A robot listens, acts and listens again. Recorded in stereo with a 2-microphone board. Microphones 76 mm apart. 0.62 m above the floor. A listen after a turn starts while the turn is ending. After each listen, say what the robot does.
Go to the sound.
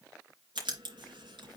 Turn 90° right.
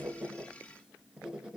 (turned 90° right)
Turn 10° right.
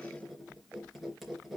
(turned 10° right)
Drive 1.0 m forward.
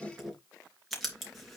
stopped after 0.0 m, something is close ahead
Something is in my way. I am facing the writing but have not reached it.